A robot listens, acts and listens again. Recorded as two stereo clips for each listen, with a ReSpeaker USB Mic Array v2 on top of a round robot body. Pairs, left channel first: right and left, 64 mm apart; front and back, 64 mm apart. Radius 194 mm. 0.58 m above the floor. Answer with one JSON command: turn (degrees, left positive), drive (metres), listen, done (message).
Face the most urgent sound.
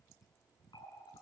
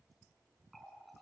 {"listen": true}
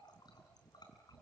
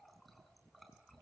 {"listen": true}
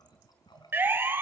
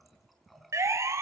{"turn": 145}
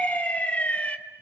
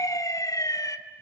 {"turn": -20}
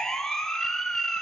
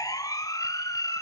{"turn": -10}
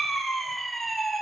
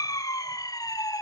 {"done": "Facing the siren, 2 to 4 m away."}